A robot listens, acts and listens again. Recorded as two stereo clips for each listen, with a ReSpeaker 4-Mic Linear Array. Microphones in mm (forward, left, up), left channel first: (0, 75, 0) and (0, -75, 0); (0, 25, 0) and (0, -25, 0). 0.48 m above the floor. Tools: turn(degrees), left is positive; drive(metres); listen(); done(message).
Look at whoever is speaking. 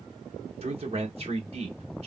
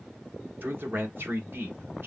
turn(degrees=-45)
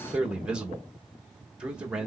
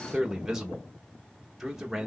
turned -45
turn(degrees=-10)
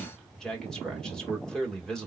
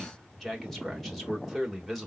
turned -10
done("Facing the man speaking, 1 to 2 m away.")